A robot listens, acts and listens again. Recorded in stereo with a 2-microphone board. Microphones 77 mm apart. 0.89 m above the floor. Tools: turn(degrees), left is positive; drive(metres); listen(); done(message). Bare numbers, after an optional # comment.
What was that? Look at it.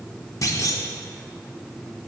# The clunk: about 45° left or 135° left.
turn(45)
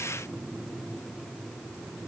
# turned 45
listen()
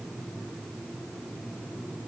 done("I heard a clunk, but can't make it out now. It was about straight ahead or 90° left.")